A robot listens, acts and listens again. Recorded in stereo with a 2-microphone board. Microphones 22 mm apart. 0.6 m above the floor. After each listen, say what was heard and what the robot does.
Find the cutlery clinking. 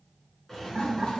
Keep listening.
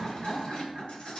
Keep listening.
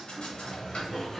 I can't make out cutlery clinking to turn to.